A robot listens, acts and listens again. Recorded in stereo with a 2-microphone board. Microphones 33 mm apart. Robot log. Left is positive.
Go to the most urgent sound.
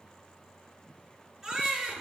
cmd yaw -30
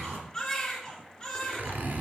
note: So it is at 15° left.
cmd yaw +15
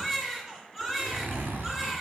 cmd fwd 1.0
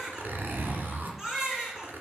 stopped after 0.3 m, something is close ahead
note: The baby crying is now 10° right.
cmd yaw -10
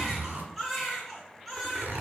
end: Something is in my way. I am facing the baby crying but have not reached it.